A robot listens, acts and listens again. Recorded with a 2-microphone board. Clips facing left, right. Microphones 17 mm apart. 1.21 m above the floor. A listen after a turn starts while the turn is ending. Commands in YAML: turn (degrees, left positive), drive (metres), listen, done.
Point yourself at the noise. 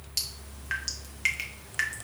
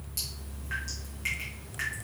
turn: 55
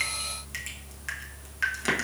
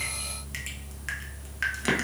done: "Facing the dripping, under 1 m away."